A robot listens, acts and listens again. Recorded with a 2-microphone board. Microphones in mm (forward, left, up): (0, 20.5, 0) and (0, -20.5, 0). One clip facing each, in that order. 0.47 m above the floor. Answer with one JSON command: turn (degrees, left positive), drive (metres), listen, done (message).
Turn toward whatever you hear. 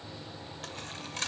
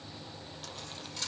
{"turn": 55}
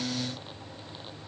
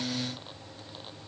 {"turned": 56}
{"listen": true}
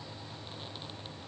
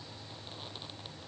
{"done": "I heard a dropped coin, but can't make it out now. It was about straight ahead or 70° left."}